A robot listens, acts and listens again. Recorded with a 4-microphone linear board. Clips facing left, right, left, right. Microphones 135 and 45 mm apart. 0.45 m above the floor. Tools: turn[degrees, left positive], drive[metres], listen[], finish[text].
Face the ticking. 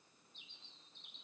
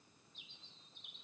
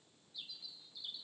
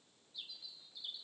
Action: listen[]
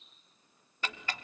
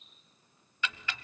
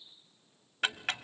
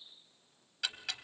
Thought: The ticking: about 40° left or 140° left.
Action: turn[40]
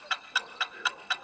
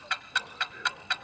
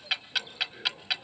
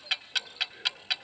Action: finish[Facing the ticking.]